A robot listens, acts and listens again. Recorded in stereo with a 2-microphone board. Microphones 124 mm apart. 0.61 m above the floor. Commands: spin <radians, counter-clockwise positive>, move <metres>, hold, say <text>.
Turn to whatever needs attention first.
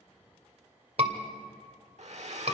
spin -0.96
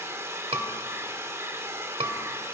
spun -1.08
spin -0.96
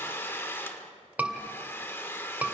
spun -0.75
spin -0.17
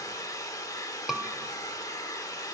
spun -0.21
say Found it: a scream, straight ahead, 2 to 4 m away.